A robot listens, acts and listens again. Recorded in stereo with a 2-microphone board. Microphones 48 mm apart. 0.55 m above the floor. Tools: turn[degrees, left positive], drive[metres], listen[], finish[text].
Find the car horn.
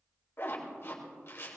Action: listen[]
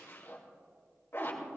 Action: listen[]
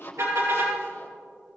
Action: turn[-90]
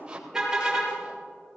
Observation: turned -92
Thought: So it is at 10° right.
Action: turn[-10]
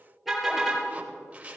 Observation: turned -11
Action: finish[Facing the car horn, over 4 m away.]